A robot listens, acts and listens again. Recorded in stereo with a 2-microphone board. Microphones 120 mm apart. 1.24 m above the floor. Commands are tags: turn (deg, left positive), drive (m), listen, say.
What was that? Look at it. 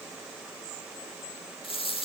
<turn deg="45"/>
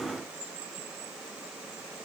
<listen/>
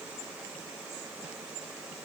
<say>I heard a dropped coin, but can't make it out now. It was about straight ahead or 90° left.</say>